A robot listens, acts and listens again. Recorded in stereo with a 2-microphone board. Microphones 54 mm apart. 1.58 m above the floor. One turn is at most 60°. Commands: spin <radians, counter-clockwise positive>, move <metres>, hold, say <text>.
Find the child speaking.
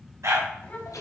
spin 0.61
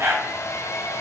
hold
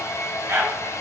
hold
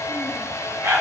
say I heard a child speaking, but can't make it out now. It was about straight ahead or 110° left.